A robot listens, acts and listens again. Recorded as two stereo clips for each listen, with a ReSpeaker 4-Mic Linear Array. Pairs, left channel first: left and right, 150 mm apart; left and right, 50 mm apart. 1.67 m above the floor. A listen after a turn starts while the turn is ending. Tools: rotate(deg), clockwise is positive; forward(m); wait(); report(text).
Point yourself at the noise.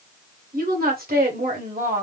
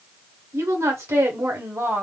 rotate(65)
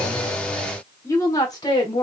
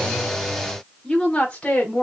rotate(-30)
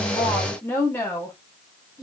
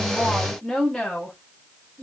rotate(-25)
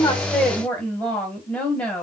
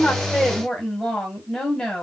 rotate(-10)
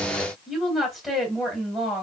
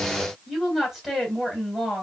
report("Found it: a woman speaking, straight ahead.")